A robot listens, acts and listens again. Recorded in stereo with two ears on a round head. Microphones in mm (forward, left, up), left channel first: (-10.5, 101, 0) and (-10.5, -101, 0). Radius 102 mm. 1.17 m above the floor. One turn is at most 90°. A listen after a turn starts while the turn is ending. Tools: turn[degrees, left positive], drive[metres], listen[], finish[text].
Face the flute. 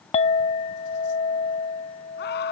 Action: listen[]
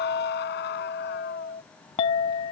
Action: listen[]
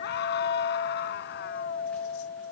Action: finish[I can't make out a flute, only a clink and a scream.]